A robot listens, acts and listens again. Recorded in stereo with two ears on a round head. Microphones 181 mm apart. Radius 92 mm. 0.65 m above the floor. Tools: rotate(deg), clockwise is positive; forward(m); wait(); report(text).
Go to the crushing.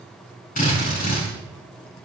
wait()
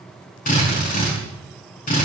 wait()
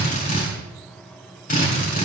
report("I can't make out crushing, only a drill.")